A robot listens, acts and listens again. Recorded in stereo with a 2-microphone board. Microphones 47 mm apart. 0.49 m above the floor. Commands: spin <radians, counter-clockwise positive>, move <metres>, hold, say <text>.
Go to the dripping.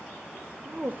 hold
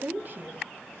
hold
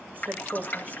spin 0.61
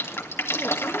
spin 1.83
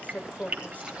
spin -0.44
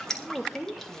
spin 0.17
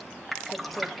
move 1.0
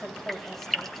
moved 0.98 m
move 1.0
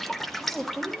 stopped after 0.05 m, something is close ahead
say I am next to the dripping.